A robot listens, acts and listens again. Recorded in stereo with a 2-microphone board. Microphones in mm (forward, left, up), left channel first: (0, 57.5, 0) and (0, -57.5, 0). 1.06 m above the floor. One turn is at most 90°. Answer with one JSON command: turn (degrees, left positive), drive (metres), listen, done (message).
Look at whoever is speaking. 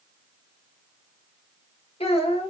{"turn": 60}
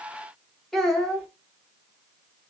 {"done": "Found it: a child speaking, straight ahead, 1 to 2 m away."}